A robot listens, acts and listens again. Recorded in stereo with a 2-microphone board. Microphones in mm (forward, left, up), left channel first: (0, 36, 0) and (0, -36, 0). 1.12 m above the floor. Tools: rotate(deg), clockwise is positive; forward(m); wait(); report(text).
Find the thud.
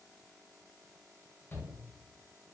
wait()
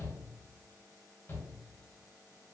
wait()
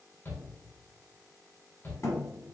rotate(-50)
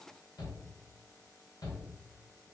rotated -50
wait()
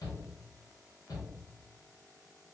report("I heard a thud, but can't make it out now. It was about straight ahead or 80° left.")